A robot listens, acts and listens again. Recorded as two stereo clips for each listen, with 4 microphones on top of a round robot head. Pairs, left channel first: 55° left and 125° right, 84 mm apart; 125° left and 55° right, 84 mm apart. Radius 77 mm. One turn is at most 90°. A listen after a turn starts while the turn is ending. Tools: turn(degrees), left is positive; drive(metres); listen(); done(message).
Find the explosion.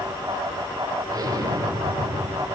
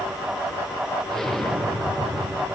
turn(degrees=-90)
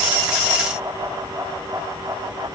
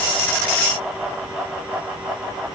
turn(degrees=-65)
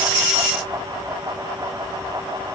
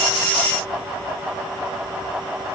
done("I heard an explosion from this way, but can't make it out now.")